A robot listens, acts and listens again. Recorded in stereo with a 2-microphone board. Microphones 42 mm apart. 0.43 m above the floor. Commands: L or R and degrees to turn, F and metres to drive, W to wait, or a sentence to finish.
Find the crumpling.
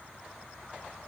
W
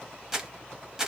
R30
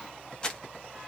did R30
L20
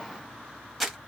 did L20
Found it: crumpling, straight ahead.